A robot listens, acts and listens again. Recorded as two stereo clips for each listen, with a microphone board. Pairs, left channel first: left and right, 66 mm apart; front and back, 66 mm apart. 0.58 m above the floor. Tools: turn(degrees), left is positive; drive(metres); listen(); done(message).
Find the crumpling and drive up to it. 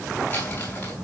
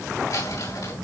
turn(degrees=25)
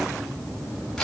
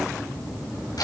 drive(metres=1.0)
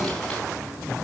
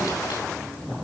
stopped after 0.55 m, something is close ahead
listen()
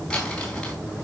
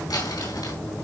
turn(degrees=10)
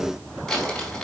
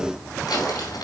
done("Blocked. The crumpling is further on, straight ahead.")